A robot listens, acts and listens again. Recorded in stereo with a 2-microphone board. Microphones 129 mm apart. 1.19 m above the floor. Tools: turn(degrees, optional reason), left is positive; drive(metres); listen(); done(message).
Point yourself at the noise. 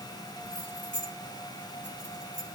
turn(degrees=-65, reason="The keys jangling: about 65° right or 115° right.")
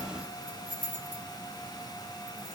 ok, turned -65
turn(degrees=10, reason="So it is at 10° left.")
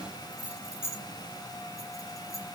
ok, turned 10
turn(degrees=20, reason="The keys jangling is now 20° left.")
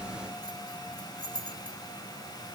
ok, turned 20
done("Found it: keys jangling, straight ahead, 2 to 4 m away.")